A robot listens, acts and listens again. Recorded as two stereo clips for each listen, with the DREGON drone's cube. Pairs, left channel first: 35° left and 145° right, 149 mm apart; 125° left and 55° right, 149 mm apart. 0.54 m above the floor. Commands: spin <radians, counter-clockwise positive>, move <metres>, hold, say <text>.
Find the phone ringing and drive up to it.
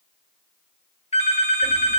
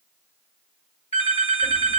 spin 1.40
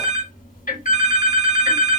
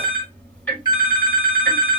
move 1.0
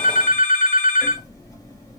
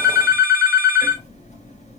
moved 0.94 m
spin 0.17
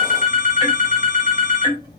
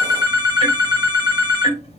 move 1.0
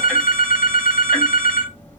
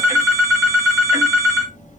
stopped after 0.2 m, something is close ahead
spin 0.26
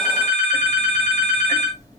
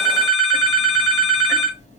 say I am next to the phone ringing.